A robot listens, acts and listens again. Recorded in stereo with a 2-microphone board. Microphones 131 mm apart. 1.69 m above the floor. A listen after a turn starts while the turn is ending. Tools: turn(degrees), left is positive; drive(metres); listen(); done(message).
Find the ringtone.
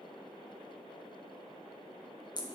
listen()
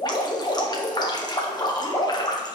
listen()
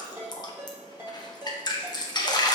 turn(degrees=-20)
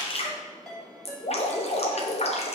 done("Facing the ringtone.")